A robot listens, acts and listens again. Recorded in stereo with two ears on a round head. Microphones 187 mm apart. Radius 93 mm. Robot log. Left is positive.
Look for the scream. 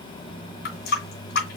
cmd idle
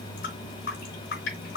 cmd idle
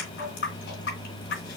end: I can't make out a scream, only a running tap.